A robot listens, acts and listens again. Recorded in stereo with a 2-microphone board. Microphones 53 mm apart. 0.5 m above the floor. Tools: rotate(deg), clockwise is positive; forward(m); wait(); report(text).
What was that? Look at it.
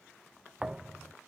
rotate(30)
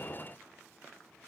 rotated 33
wait()
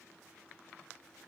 report("I heard a thud, but can't make it out now. It was about 20° left or 135° right.")